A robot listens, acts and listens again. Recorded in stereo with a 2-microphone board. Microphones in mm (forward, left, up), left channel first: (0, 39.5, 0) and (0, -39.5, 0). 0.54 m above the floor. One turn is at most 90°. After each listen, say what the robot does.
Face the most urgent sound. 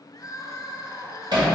Turn 45° left.
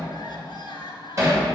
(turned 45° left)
Turn 90° left.
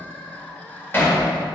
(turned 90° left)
Turn 15° left.
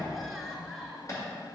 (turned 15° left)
Facing the crying, 1 to 2 m away.